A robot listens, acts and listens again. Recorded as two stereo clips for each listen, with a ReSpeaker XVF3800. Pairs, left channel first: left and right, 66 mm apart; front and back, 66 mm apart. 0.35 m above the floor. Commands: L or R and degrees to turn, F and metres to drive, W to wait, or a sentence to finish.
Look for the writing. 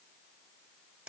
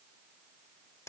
W
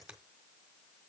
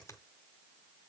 W
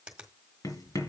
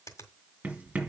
L110
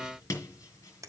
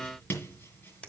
L55
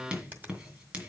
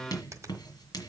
R20
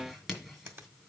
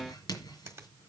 Found it: writing, straight ahead, 2 to 4 m away.